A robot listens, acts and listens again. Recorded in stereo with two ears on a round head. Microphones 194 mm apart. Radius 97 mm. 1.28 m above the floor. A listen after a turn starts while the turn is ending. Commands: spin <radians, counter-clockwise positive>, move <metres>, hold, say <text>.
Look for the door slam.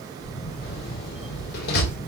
spin 0.87
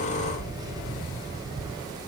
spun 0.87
hold
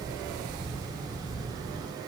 say I heard a door slam, but can't make it out now. It was about straight ahead or 80° left.